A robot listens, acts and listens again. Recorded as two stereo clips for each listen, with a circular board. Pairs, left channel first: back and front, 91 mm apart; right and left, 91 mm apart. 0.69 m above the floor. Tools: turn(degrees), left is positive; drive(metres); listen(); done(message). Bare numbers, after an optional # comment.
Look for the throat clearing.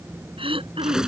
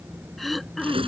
done("Found it: throat clearing, straight ahead.")